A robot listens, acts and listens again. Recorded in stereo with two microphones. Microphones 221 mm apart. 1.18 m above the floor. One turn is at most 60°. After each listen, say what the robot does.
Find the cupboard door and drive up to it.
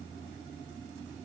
Keep listening.
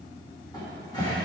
Turn 20° left.
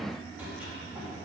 Drive 1.0 m forward.
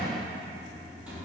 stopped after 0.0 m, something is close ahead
Blocked. The cupboard door is further on, straight ahead.